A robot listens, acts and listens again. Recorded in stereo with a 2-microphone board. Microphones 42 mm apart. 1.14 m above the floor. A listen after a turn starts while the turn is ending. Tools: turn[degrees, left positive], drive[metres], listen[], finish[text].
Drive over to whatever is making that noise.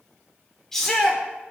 Action: turn[30]
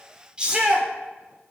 Thought: So it is at 20° right.
Action: turn[-20]
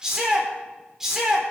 Thought: The shout is now 10° right.
Action: turn[-10]
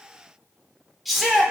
Action: drive[1.0]
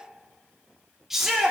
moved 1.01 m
Action: drive[1.0]
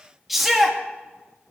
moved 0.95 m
Action: drive[1.0]
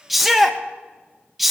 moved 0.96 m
Action: drive[1.0]
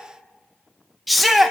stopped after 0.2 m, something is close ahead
Action: finish[I am next to the shout.]